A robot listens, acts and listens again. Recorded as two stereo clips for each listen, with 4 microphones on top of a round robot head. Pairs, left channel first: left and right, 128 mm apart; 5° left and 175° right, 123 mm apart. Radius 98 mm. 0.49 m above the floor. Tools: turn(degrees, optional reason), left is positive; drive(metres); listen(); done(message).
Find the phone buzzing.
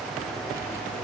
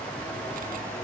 listen()
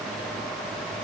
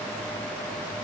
listen()
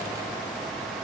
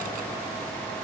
done("I can't make out a phone buzzing to turn to.")